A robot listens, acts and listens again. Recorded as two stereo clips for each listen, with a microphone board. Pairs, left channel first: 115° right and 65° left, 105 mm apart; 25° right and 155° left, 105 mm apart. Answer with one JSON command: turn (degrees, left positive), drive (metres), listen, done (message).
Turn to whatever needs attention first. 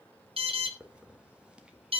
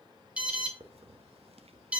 {"turn": 80}
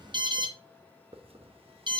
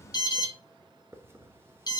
{"turn": 25}
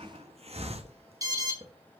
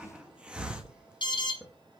{"turn": 15}
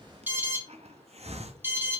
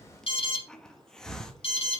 {"done": "Found it: an alarm, straight ahead."}